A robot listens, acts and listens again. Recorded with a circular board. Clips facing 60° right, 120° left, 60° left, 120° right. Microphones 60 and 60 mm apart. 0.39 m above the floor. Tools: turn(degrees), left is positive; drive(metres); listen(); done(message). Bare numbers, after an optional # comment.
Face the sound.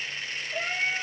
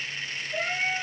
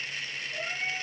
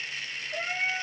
# The cat meowing: 160° right.
turn(-160)
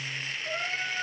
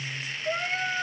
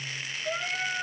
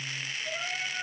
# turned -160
# The cat meowing is now 55° left.
turn(55)
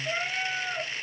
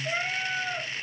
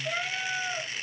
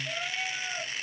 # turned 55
# The cat meowing is now 30° left.
turn(30)
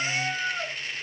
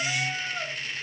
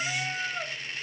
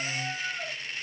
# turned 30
# The cat meowing is now 15° left.
turn(15)
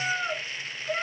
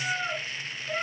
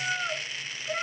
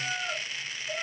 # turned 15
# The cat meowing is now 15° left.
turn(15)
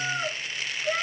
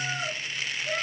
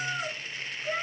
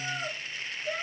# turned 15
done("Facing the cat meowing, 2 to 4 m away.")